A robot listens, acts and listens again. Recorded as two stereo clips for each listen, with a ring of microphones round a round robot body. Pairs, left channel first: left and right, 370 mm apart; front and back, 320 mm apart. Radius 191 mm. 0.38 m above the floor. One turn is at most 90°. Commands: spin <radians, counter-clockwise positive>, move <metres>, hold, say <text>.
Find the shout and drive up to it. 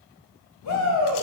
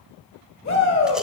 spin 0.87
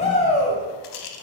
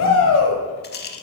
spin 0.35
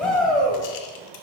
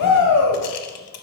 move 1.0
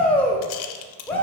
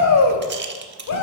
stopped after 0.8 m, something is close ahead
say I am next to the shout.